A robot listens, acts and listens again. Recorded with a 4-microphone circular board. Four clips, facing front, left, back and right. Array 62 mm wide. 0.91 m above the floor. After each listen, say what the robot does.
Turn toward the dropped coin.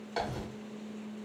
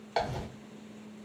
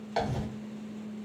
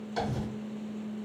Turn 110° left.
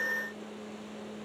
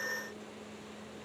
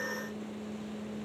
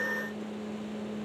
I heard a dropped coin from this way, but can't make it out now.